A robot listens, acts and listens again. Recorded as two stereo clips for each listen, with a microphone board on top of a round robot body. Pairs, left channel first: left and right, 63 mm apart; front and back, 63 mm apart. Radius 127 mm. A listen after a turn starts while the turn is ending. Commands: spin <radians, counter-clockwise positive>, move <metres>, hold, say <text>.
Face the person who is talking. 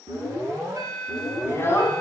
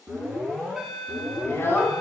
spin 0.79
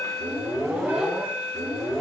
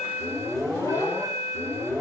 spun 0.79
hold
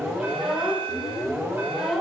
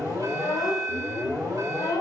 say Facing the child speaking.